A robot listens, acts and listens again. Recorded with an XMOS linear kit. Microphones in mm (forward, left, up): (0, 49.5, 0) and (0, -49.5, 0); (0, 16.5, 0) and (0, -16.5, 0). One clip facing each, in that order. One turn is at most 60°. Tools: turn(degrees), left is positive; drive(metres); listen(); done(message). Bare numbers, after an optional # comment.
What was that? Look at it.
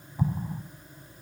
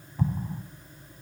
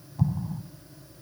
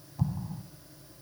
turn(30)
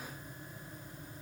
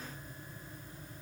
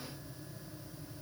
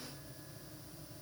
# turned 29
listen()
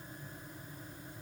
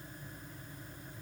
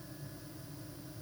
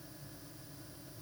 done("I heard an explosion, but can't make it out now. It was about 20° right or 140° left.")